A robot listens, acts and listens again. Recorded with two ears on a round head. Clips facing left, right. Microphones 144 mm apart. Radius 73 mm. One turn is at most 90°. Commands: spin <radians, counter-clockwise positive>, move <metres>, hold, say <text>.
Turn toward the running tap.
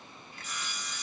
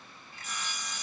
hold
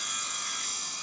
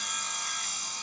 hold
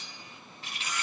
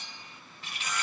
spin -1.57
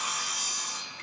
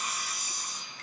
hold
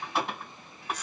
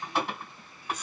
say Facing the running tap, 1 to 2 m away.